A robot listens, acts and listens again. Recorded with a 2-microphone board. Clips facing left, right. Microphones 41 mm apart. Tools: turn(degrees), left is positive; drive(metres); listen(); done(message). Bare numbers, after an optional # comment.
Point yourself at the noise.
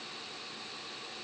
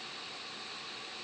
listen()
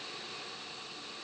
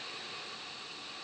listen()
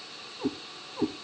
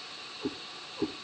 # The cat meowing: about 55° left or 125° left.
turn(55)
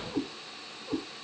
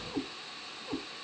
# So it is at 15° right.
turn(-15)
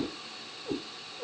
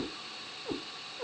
# The cat meowing is now 35° right.
turn(-35)
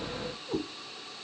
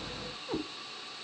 # The cat meowing is now 25° right.
turn(-25)
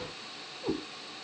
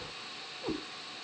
done("Facing the cat meowing, 1 to 2 m away.")